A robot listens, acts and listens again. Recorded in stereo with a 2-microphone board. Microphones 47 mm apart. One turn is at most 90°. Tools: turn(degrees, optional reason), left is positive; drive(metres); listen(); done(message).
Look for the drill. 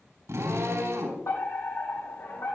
turn(degrees=-90)
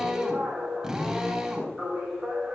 turn(degrees=-10, reason="So it is at 10° right.")
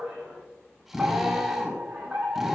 done("Facing the drill.")